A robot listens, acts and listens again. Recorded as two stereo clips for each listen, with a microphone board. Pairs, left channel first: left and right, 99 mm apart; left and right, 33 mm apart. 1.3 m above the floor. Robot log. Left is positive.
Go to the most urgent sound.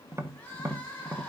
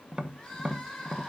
cmd yaw +30
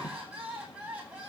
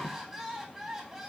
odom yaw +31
note: So it is at 15° right.
cmd yaw -15
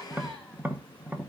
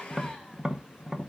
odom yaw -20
cmd idle
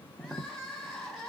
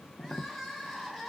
cmd fwd 1.0
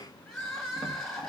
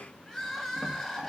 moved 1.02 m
cmd fwd 1.0
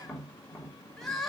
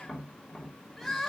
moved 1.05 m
cmd fwd 1.0
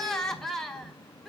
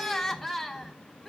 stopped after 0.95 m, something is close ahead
end: Arrived at the crying, straight ahead.